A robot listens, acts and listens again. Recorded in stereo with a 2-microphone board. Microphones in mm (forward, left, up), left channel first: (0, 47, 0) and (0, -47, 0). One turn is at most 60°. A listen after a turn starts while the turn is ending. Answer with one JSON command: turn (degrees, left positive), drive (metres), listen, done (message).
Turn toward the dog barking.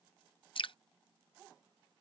{"listen": true}
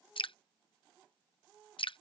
{"listen": true}
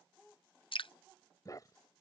{"turn": 40}
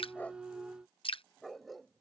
{"done": "Facing the dog barking."}